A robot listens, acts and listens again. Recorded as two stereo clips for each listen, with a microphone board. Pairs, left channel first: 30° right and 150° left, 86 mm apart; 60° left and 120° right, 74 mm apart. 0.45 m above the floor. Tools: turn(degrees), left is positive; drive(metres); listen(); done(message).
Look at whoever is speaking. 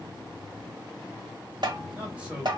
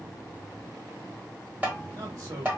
turn(degrees=-135)
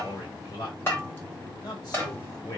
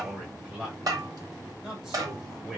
turn(degrees=-40)
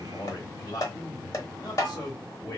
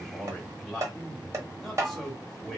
turn(degrees=-20)
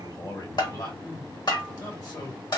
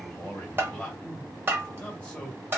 turn(degrees=-10)
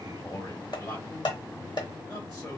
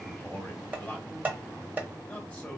done("Facing the man speaking.")